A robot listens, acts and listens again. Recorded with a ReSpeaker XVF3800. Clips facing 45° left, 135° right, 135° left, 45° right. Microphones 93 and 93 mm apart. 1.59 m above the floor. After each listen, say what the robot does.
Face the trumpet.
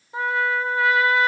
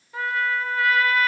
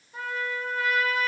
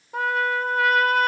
Turn 20° right.
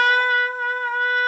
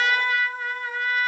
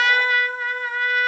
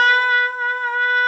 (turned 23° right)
Facing the trumpet.